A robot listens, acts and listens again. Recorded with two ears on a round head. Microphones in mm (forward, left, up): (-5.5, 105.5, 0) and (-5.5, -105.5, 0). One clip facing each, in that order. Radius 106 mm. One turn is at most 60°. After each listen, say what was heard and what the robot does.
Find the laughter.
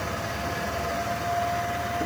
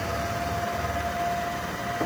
Keep listening.
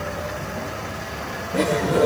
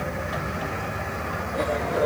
The laughter: about 60° left or 120° left. Turn 60° left.
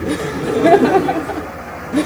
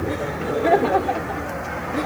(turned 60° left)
So it is at 65° left. Turn 60° left.
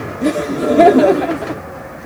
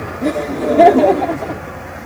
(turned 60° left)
The laughter is now 15° left. Turn 15° left.
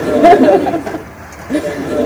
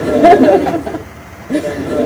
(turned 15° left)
Facing the laughter.